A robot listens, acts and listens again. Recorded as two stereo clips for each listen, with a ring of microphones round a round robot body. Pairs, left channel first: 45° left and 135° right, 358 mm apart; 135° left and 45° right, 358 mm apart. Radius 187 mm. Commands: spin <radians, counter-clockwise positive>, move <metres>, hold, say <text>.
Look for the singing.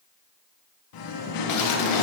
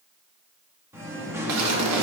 spin 0.70
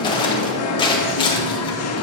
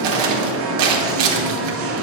say Found it: singing, straight ahead.